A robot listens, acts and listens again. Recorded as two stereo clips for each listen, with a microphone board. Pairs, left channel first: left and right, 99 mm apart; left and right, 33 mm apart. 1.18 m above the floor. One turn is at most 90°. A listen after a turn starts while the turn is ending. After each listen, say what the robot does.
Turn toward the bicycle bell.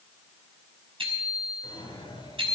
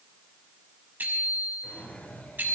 Turn 65° right.
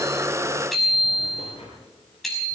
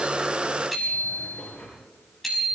Found it: a bicycle bell, straight ahead.